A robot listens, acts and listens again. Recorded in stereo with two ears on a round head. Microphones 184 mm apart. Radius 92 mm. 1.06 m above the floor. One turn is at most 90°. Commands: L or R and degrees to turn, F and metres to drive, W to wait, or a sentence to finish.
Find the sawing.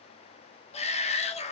W
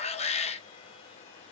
W
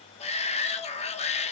I can't make out sawing, only a shout.